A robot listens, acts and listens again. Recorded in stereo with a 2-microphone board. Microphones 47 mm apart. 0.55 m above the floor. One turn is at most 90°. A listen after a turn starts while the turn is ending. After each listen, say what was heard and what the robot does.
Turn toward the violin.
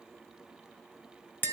Keep listening.
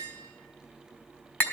Keep listening.
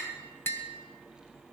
I can't make out a violin to turn to.